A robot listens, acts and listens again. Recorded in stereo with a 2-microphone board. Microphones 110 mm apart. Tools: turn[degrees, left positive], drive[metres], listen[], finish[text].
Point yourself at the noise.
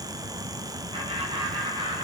Thought: The laughter: about 50° right or 130° right.
Action: turn[-50]
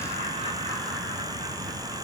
Thought: So it is at 85° right.
Action: turn[-85]
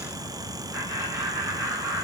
Thought: The laughter is now 25° right.
Action: turn[-25]
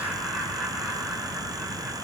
Action: finish[Facing the laughter.]